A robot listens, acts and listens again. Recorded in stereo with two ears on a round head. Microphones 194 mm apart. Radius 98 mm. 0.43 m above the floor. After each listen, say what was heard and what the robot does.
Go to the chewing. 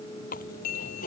The chewing: about 40° left or 140° left. Turn 40° left.
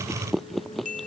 Drive 1.0 m forward.
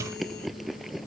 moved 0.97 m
Drive 1.0 m forward.
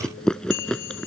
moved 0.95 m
Drive 1.0 m forward.
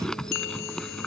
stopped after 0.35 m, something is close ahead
I am next to the chewing.